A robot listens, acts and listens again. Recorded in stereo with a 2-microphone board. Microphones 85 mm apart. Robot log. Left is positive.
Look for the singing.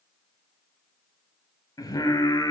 note: The singing: about 45° left or 135° left.
cmd yaw +45
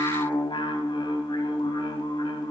note: So it is at 85° left.
cmd yaw +85
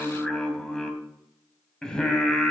note: The singing is now 10° left.
cmd yaw +10
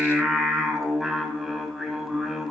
end: Facing the singing.